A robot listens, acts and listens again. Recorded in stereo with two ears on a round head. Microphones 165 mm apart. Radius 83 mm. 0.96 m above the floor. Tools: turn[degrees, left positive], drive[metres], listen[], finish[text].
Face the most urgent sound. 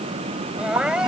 Action: turn[-30]
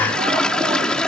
Action: listen[]
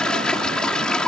Action: listen[]
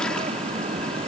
Action: finish[I heard crying, but can't make it out now. It was about 25° left or 145° right.]